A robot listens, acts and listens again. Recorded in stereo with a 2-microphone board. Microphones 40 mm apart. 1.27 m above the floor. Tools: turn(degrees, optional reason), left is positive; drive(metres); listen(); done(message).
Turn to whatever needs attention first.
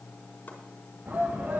turn(degrees=-45, reason="The shout: about 45° right or 135° right.")
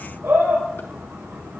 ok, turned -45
turn(degrees=-90, reason="So it is at 90° right.")
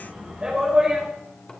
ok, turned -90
turn(degrees=-30, reason="The shout is now 30° right.")
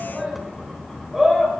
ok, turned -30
turn(degrees=-10, reason="The shout is now 10° right.")
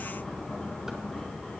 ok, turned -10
listen()
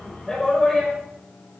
done("Found it: a shout, straight ahead, over 4 m away.")